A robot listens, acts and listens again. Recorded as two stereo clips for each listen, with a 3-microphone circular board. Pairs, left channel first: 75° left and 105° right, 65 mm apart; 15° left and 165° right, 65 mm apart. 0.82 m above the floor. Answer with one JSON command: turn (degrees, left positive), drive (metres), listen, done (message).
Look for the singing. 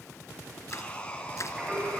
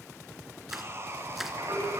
{"turn": -170}
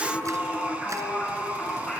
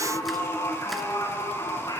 {"done": "Found it: singing, straight ahead."}